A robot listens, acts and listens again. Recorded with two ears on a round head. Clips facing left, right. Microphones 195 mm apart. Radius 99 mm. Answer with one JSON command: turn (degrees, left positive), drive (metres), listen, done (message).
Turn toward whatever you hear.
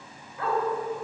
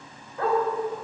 {"turn": -40}
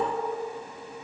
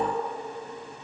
{"listen": true}
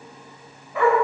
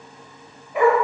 {"turn": -15}
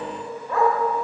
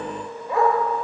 {"turn": -10}
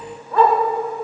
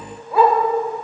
{"turn": -10}
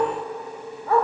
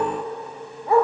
{"turn": -15}
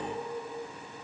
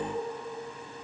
{"listen": true}
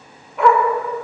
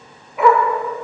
{"done": "Facing the dog barking."}